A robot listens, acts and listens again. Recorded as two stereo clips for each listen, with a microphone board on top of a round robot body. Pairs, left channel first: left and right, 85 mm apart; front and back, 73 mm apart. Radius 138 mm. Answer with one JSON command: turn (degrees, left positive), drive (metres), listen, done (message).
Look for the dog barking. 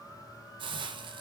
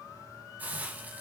{"listen": true}
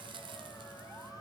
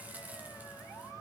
{"listen": true}
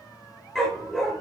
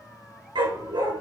{"turn": 175}
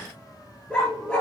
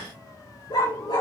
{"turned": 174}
{"turn": 15}
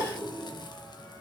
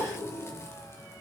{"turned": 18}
{"listen": true}
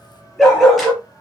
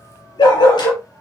{"done": "Facing the dog barking."}